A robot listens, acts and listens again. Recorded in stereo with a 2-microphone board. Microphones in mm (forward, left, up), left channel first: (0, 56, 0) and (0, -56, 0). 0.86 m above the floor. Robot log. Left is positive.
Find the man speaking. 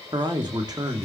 note: The man speaking: about 35° right or 145° right.
cmd yaw -35
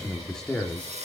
end: Facing the man speaking.